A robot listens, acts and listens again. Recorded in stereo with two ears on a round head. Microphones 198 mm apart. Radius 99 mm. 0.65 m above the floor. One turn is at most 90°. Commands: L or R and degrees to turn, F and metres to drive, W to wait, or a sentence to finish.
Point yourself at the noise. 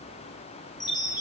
L20
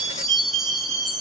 Facing the chime, 2 to 4 m away.